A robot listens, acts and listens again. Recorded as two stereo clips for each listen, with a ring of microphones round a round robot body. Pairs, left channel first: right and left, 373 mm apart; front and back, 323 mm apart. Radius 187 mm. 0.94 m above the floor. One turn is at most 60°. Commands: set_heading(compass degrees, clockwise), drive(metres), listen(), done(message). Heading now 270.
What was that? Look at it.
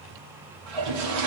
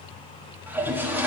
set_heading(210)
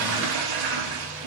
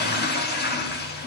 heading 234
set_heading(174)
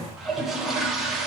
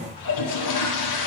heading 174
done("Found it: a toilet flushing, straight ahead.")